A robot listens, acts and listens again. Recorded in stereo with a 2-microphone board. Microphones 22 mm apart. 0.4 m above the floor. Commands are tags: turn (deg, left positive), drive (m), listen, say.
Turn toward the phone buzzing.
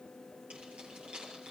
<listen/>
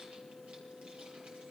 <listen/>
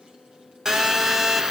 <turn deg="-30"/>
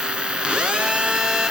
<turn deg="-120"/>
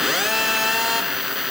<turn deg="-10"/>
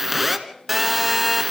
<say>Found it: a phone buzzing, straight ahead, 1 to 2 m away.</say>